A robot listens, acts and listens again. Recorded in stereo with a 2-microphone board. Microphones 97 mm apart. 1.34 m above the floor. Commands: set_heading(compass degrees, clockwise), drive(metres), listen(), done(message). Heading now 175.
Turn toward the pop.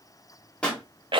set_heading(145)
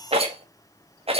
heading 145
listen()
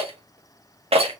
done("I heard a pop, but can't make it out now. It was about 20° right or 140° left.")